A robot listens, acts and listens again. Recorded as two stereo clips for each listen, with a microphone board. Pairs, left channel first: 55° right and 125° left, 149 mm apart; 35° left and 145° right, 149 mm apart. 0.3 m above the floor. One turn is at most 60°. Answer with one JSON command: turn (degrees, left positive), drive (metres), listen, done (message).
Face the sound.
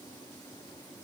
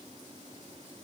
{"listen": true}
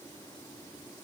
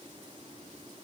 {"listen": true}
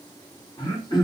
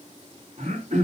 {"turn": -60}
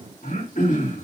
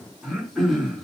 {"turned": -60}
{"turn": -55}
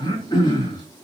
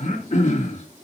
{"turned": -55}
{"done": "Facing the throat clearing, over 4 m away."}